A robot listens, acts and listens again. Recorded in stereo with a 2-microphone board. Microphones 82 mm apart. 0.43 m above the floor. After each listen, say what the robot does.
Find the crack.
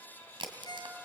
Turn 75° right.
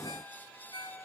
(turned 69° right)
Keep listening.
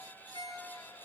I heard a crack, but can't make it out now. It was about 5° right or 40° right.